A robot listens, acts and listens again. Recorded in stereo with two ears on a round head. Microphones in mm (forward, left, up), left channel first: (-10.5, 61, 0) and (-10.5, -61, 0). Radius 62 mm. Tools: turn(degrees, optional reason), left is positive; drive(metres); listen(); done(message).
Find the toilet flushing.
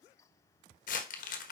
listen()
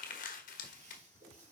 turn(degrees=-60, reason="The toilet flushing: about 60° right or 120° right.")
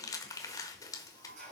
turn(degrees=-60, reason="So it is at 60° right.")
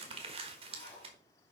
turn(degrees=20, reason="The toilet flushing is now 20° left.")
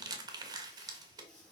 done("Facing the toilet flushing.")